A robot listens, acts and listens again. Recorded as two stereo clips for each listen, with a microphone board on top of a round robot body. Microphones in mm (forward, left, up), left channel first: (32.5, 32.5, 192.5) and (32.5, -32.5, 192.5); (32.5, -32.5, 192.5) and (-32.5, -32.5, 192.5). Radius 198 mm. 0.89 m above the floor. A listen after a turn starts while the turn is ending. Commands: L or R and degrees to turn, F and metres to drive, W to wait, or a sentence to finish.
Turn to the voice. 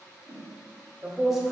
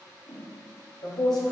Facing the man speaking.